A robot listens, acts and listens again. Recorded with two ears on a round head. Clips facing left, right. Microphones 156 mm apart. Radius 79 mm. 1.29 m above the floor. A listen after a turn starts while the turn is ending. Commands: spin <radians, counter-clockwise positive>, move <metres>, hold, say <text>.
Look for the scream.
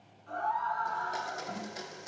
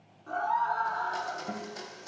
spin -1.13
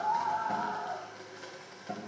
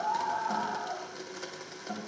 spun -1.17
say Found it: a scream, straight ahead.